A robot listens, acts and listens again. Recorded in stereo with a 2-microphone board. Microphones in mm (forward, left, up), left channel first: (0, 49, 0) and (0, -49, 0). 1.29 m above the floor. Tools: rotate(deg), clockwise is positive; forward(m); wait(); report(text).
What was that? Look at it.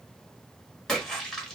rotate(-30)
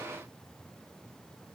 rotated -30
wait()
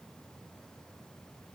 report("I heard a splash, but can't make it out now. It was about 25° right or 145° left.")